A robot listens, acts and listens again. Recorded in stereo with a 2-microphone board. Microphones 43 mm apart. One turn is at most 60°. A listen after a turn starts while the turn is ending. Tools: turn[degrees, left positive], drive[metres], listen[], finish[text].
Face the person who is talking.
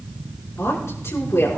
Action: turn[60]
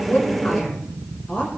Thought: So it is at 35° left.
Action: turn[35]
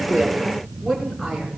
Action: finish[Found it: a woman speaking, straight ahead.]